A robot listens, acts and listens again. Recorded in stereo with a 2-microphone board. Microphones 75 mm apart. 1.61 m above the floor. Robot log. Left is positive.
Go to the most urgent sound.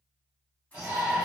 note: The shout: about 25° right or 155° right.
cmd yaw -25
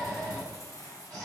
cmd fwd 1.0
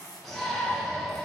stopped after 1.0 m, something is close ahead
end: I am next to the shout.